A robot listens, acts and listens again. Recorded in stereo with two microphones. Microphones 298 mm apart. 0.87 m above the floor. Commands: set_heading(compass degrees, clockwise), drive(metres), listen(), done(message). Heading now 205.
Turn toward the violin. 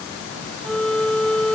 set_heading(175)
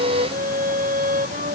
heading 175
set_heading(205)
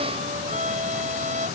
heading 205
set_heading(230)
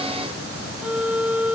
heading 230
done("Facing the violin.")